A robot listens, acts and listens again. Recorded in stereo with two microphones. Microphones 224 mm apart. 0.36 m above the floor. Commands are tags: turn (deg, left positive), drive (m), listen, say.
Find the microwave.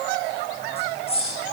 <listen/>
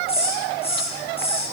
<listen/>
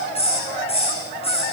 <say>I can't make out a microwave to turn to.</say>